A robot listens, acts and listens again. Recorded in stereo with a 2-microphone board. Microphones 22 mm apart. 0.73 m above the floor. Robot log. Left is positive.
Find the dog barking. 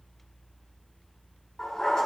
note: The dog barking: about 30° left or 150° left.
cmd yaw +30
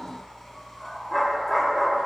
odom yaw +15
end: Facing the dog barking.